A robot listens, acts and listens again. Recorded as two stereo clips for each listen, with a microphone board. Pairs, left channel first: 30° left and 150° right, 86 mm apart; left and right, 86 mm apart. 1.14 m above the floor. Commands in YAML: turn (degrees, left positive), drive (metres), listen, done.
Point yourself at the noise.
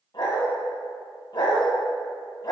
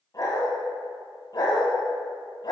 turn: 60
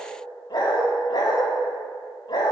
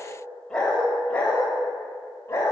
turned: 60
turn: 40
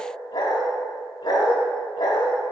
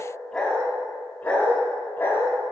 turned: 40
turn: 30
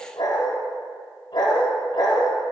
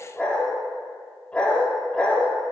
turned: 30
turn: 15
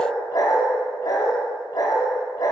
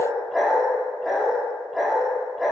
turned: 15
done: "Found it: a dog barking, straight ahead, 1 to 2 m away."